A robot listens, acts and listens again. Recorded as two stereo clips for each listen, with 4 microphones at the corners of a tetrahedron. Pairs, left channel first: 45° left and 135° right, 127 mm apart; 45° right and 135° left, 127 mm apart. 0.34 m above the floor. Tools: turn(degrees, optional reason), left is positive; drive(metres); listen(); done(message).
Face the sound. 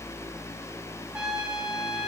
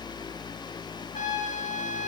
turn(degrees=-55, reason="The trumpet: 55° right.")
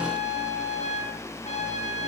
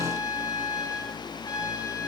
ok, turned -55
turn(degrees=15, reason="The trumpet is now 15° left.")
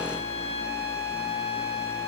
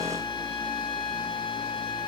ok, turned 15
done("Facing the trumpet.")